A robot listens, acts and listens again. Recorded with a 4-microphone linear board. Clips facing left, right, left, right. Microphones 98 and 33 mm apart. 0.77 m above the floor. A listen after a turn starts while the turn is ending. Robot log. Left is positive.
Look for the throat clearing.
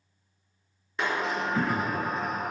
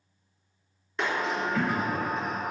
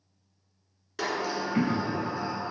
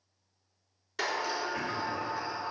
note: The throat clearing: about 40° left or 140° left.
cmd yaw +40
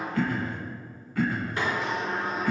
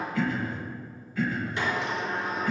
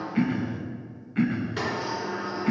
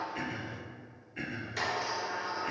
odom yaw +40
note: So it is at 100° left.
cmd yaw +100
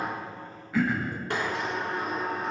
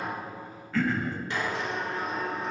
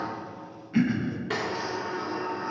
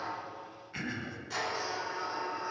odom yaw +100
note: The throat clearing is now 10° left.
cmd yaw +10
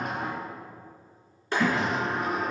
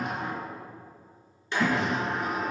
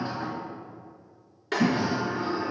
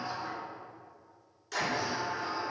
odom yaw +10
end: Found it: throat clearing, straight ahead.